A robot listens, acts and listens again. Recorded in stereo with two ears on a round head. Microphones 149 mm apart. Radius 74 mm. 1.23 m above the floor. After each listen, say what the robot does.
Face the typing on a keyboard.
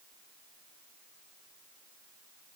Keep listening.
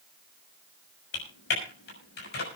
Turn 70° left.
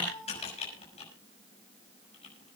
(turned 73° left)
Turn 40° left.
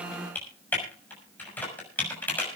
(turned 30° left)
Turn 10° left.
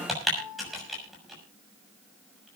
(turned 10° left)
Facing the typing on a keyboard, over 4 m away.